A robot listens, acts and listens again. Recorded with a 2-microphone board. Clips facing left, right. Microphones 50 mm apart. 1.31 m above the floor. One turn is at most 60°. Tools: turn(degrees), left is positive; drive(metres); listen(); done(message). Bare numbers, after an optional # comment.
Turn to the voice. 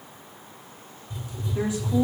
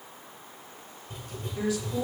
# The woman speaking: about 25° left or 155° left.
turn(25)
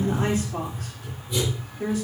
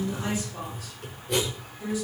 # So it is at 125° left.
turn(60)
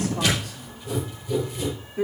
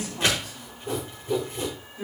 # The woman speaking is now 60° left.
turn(60)
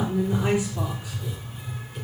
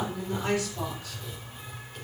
# The woman speaking is now 20° left.
turn(20)
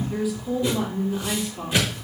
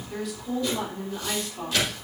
done("Facing the woman speaking.")